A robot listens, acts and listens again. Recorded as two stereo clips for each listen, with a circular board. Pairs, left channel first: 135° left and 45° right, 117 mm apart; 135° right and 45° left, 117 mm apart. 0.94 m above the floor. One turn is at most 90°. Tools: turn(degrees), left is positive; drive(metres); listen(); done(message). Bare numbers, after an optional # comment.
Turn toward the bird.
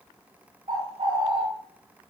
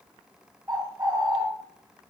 # The bird: 15° right.
turn(-15)
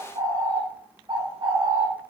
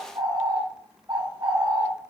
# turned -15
done("Found it: a bird, straight ahead.")